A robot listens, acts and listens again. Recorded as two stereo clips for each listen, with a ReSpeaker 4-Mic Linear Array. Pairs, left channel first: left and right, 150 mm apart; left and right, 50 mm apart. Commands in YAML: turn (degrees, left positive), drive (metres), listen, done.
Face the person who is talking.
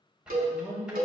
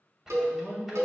turn: -40
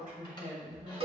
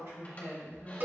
turn: -110
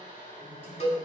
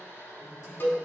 listen: true
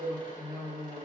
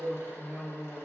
turn: -15
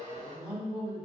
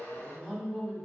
done: "Facing the woman speaking, 2 to 4 m away."